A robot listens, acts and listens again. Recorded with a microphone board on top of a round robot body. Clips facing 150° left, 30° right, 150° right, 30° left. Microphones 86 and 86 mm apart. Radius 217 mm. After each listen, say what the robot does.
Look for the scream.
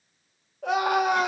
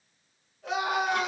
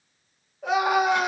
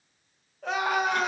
Turn 130° left.
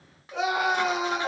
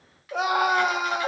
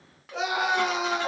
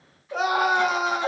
Facing the scream, 1 to 2 m away.